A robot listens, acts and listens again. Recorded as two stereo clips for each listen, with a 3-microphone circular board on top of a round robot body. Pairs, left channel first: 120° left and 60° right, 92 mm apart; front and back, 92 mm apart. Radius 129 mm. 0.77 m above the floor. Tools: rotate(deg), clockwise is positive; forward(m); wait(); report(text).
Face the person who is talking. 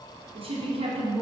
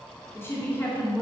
rotate(65)
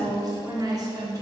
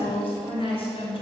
rotate(10)
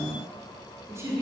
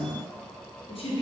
report("Found it: a woman speaking, straight ahead.")